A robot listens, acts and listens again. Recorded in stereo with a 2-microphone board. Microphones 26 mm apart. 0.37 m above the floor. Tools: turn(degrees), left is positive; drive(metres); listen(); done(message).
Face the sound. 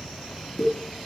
turn(degrees=30)
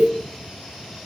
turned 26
listen()
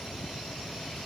done("I heard a pop, but can't make it out now. It was about 5° left or 125° left.")